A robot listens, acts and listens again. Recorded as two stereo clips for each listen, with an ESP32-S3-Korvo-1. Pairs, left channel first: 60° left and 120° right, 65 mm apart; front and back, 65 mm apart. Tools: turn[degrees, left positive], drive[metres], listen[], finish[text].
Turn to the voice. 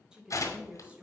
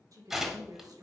Thought: The woman speaking: 170° left.
Action: turn[170]
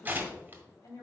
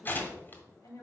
Thought: The woman speaking is now 30° left.
Action: turn[30]
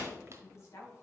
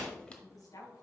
Thought: The woman speaking is now 20° left.
Action: turn[20]
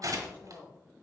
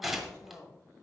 Action: finish[Facing the woman speaking.]